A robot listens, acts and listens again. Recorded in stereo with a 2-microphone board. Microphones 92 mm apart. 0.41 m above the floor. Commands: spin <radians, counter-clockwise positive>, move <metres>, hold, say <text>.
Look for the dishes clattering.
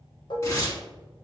spin 1.05
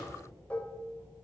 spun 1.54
spin 0.26
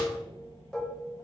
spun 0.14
say Facing the dishes clattering, under 1 m away.